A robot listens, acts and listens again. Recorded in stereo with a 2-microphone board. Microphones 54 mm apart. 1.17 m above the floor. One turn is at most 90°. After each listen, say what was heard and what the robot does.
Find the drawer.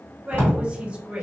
The drawer: about 35° left or 145° left. Turn 35° left.
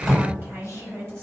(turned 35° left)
Facing the drawer, 1 to 2 m away.